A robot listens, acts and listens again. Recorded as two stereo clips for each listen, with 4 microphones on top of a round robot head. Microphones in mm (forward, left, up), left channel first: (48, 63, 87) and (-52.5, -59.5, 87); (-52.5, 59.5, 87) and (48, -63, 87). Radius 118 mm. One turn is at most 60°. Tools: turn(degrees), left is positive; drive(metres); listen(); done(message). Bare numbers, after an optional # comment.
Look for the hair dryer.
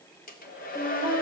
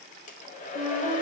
# The hair dryer: 85° left.
turn(60)
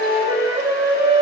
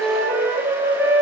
# Nothing new. It was at 25° left.
turn(25)
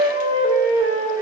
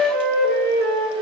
listen()
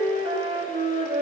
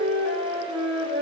done("I heard a hair dryer from this way, but can't make it out now.")